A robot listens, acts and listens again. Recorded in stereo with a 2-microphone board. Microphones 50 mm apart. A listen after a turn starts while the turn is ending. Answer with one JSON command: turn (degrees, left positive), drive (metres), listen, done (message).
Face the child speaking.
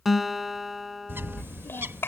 {"turn": 55}
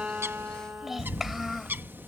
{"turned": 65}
{"done": "Found it: a child speaking, straight ahead."}